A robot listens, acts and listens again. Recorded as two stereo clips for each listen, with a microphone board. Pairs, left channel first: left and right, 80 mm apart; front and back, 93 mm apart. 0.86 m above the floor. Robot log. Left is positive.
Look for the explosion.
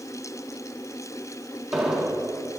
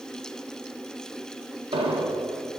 note: The explosion: 175° right.
cmd yaw -175
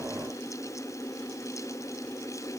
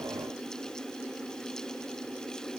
end: I heard an explosion from this way, but can't make it out now.